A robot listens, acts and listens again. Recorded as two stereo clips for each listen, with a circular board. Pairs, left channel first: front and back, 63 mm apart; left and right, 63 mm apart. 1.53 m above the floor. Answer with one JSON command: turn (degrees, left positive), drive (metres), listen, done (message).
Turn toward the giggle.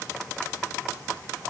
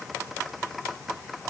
{"listen": true}
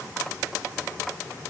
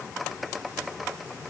{"listen": true}
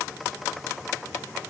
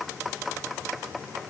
{"done": "I can't make out a giggle to turn to."}